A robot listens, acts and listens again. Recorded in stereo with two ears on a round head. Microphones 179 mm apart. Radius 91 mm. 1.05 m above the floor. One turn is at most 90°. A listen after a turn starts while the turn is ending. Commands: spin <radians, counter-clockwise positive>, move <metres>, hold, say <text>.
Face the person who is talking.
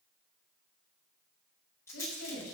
spin 1.22
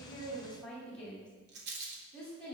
say Found it: a woman speaking, straight ahead.